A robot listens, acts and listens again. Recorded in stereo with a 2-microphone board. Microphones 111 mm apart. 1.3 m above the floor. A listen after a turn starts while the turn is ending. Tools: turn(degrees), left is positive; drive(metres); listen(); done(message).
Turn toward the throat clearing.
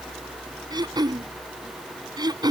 turn(degrees=-40)
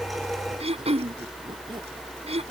turn(degrees=-100)
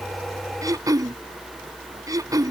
turn(degrees=-35)
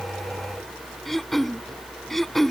done("Facing the throat clearing.")